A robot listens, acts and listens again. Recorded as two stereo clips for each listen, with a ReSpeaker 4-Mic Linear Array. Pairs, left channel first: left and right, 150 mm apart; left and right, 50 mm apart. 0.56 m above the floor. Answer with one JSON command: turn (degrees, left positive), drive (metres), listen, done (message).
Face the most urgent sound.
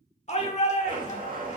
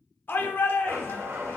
{"turn": 50}
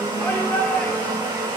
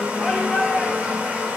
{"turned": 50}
{"turn": 15}
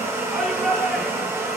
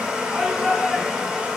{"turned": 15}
{"done": "Facing the shout."}